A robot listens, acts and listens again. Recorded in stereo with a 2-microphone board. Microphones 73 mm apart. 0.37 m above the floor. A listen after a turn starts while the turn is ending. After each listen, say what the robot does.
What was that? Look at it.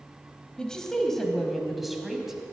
Turn 30° right.
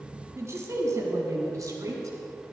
Turn 135° right.
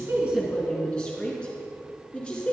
Turn 10° left.
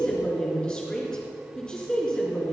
Turn 10° left.
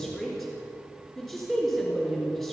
Found it: a woman speaking, straight ahead, over 4 m away.